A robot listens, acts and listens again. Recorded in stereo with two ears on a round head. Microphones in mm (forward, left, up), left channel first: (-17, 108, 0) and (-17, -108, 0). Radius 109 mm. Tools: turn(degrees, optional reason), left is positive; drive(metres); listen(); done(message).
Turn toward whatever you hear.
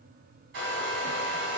turn(degrees=-50, reason="The hair dryer: about 50° right or 130° right.")
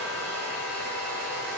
turn(degrees=-60, reason="So it is at 60° right.")
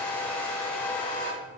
turn(degrees=10, reason="The hair dryer is now 10° left.")
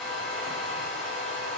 done("Found it: a hair dryer, straight ahead, 1 to 2 m away.")